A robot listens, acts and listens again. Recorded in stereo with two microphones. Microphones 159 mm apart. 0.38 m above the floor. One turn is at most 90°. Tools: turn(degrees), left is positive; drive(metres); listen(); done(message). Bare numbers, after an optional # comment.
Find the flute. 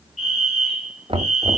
listen()
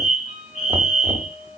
# The flute: about 30° left or 150° left.
turn(30)
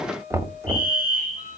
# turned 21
# So it is at 130° left.
turn(90)
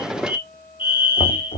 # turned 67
# The flute is now 65° left.
turn(65)
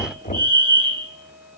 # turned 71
listen()
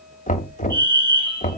listen()
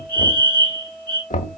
done("Facing the flute, over 4 m away.")